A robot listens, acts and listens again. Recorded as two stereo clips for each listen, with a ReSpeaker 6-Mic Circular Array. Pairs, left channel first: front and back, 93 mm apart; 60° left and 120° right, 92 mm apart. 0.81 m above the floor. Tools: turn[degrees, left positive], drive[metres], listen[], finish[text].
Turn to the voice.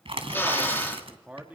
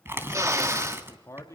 Thought: The man speaking: 110° left.
Action: turn[110]
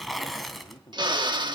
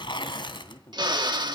Thought: The man speaking is now 25° left.
Action: turn[25]
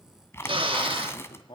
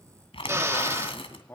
Action: finish[Facing the man speaking, 1 to 2 m away.]